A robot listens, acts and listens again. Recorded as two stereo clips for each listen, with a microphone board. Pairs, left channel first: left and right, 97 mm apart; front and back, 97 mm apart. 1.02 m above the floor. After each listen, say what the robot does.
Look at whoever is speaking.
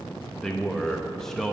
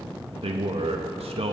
Turn 175° left.
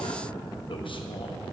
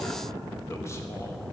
Keep listening.
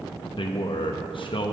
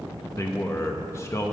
Turn 60° left.
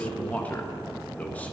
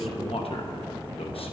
Turn 15° left.
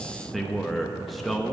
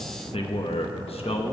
Facing the man speaking, under 1 m away.